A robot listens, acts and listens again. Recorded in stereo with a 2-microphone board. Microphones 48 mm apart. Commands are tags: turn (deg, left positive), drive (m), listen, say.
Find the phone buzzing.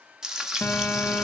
<turn deg="50"/>
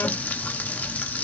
<turn deg="80"/>
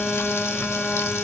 <say>Facing the phone buzzing.</say>